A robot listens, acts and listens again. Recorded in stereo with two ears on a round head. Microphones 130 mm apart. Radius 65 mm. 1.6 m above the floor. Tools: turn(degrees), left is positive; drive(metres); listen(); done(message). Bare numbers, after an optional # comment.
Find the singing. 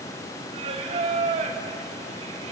# The singing: about 45° right or 135° right.
turn(-45)
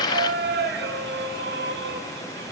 # So it is at 90° right.
turn(-90)
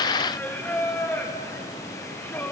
# The singing is now 15° left.
turn(15)
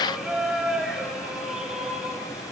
done("Found it: singing, straight ahead.")